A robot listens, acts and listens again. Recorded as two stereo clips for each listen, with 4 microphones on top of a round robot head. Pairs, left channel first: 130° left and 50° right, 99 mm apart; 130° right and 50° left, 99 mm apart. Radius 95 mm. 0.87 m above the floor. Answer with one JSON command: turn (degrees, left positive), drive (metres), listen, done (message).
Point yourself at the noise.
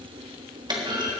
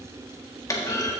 {"turn": -80}
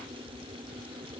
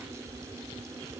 {"done": "I heard a clunk from this way, but can't make it out now."}